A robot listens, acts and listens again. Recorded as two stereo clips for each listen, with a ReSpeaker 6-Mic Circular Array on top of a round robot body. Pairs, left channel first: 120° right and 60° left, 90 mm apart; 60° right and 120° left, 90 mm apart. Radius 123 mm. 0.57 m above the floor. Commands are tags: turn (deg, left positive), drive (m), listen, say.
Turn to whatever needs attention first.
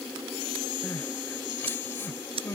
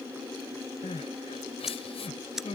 <turn deg="-55"/>
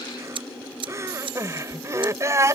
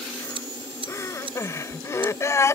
<say>Found it: crying, straight ahead.</say>